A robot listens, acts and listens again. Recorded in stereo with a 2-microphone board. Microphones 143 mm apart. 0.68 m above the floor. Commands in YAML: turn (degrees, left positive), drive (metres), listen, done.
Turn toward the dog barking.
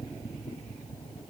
listen: true
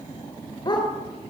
turn: 30
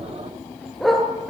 done: "Facing the dog barking, over 4 m away."